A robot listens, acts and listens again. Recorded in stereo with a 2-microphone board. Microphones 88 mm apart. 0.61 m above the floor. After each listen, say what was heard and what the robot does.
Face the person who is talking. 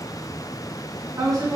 The woman speaking: about 45° right or 135° right. Turn 45° right.
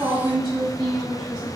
So it is at 85° right. Turn 85° right.
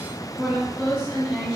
The woman speaking is now 15° right. Turn 15° right.
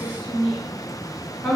Facing the woman speaking, 1 to 2 m away.